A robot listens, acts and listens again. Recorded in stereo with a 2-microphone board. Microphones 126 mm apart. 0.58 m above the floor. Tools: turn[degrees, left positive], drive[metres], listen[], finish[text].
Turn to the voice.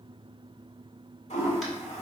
Action: listen[]
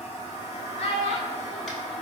Thought: The child speaking: about 50° left or 130° left.
Action: turn[50]
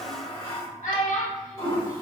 Thought: So it is at 85° left.
Action: turn[85]
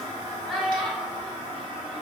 Action: finish[Facing the child speaking, 1 to 2 m away.]